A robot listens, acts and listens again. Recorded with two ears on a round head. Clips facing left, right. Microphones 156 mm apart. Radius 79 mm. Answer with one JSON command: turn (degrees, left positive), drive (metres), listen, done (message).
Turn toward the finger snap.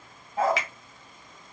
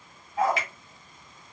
{"turn": 60}
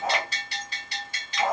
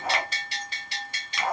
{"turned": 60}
{"listen": true}
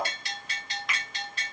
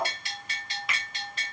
{"done": "Facing the finger snap, under 1 m away."}